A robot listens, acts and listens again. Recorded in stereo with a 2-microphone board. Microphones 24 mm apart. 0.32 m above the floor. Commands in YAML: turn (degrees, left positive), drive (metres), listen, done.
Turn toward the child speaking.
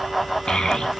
turn: 40
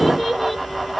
done: "Facing the child speaking, 2 to 4 m away."